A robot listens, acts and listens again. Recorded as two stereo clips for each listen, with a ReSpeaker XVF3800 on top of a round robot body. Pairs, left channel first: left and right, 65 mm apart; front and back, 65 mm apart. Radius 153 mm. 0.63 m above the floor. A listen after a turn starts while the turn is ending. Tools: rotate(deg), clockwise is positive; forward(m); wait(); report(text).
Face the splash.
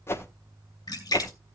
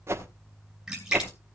rotate(-100)
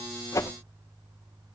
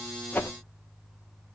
report("I heard a splash from this way, but can't make it out now.")